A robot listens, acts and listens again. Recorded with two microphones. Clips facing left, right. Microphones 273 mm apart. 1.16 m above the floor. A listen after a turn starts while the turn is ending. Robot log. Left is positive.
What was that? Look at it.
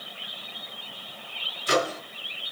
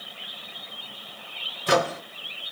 note: The microwave: about 70° right or 110° right.
cmd yaw -70
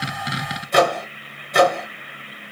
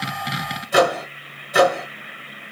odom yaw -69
end: Found it: a microwave, straight ahead, 1 to 2 m away.